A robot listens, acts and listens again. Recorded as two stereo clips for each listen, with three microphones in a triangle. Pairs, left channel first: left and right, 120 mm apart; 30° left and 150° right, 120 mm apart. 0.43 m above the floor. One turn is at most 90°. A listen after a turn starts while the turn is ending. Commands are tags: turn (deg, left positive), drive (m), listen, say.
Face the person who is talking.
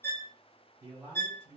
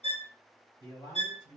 <turn deg="-20"/>
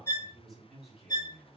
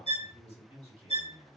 <say>Facing the man speaking.</say>